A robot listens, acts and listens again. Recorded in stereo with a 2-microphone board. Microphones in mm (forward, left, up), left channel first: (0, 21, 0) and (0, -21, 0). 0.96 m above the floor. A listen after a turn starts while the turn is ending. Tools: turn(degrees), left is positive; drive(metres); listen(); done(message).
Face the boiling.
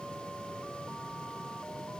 listen()
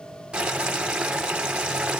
turn(degrees=-25)
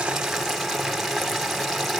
done("Found it: boiling, straight ahead.")